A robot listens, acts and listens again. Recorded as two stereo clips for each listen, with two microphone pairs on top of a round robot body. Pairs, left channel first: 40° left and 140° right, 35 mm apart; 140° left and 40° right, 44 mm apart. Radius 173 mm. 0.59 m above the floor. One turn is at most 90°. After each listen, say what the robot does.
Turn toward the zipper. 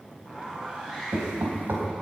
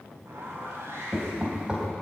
Turn 70° right.
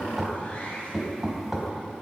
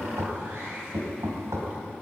Turn 10° right.
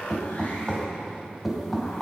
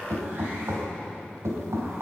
Keep listening.
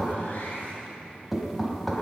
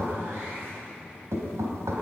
Found it: a zipper, straight ahead.